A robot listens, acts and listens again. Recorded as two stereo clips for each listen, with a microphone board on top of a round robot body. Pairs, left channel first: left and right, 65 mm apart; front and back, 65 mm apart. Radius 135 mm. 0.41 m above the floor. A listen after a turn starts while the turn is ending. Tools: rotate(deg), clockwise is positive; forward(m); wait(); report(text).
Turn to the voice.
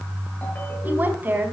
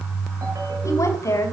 rotate(35)
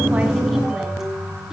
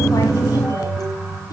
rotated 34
wait()
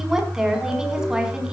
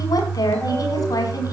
rotate(10)
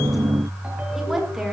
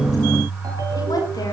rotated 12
report("Found it: a woman speaking, straight ahead.")